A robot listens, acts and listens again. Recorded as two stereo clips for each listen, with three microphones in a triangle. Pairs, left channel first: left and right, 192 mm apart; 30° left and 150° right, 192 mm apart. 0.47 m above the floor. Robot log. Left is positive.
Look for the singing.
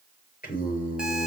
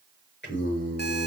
note: The singing: 45° left.
cmd yaw +45
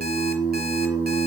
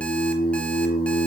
note: The singing is now 10° right.
cmd yaw -10
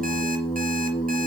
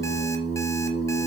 end: Found it: singing, straight ahead, over 4 m away.